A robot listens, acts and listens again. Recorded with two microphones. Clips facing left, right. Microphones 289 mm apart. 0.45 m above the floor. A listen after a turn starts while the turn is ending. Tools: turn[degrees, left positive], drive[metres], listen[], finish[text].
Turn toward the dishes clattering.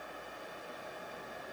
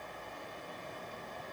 Action: listen[]
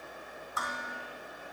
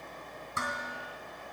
Thought: The dishes clattering: about 30° right or 150° right.
Action: turn[-30]
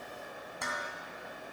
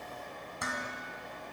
Action: finish[Facing the dishes clattering, 2 to 4 m away.]